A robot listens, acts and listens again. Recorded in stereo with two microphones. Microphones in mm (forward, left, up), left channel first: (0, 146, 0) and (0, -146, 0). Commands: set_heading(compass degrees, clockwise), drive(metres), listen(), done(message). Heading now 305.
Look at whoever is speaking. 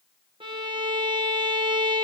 listen()
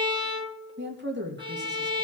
set_heading(340)
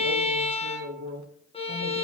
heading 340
set_heading(90)
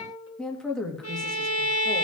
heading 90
done("Found it: a woman speaking, straight ahead, 2 to 4 m away.")